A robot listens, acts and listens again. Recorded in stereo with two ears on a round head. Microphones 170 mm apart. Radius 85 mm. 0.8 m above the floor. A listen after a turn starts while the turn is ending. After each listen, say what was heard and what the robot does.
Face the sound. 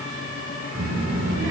Turn 90° right.
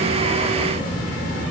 Found it: a child speaking, straight ahead.